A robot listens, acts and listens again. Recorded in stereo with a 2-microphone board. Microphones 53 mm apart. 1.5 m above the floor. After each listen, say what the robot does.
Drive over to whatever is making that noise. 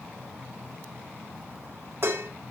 Turn 55° right.
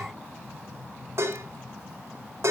Turn 65° right.
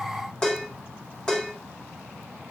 Turn 15° left.
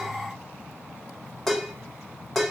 Drive 1.0 m forward.
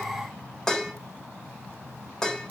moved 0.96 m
Turn 15° left.
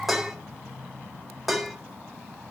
Drive 1.0 m forward.
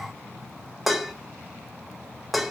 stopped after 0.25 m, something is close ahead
Arrived at the dishes clattering, straight ahead.